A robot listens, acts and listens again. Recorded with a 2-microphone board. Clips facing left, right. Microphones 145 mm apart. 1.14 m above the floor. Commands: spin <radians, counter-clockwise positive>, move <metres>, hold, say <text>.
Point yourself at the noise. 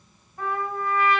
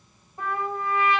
spin -0.44
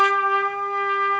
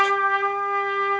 spin -2.18
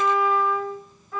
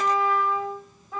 spin -0.35
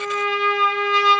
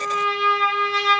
say Facing the trumpet, 1 to 2 m away.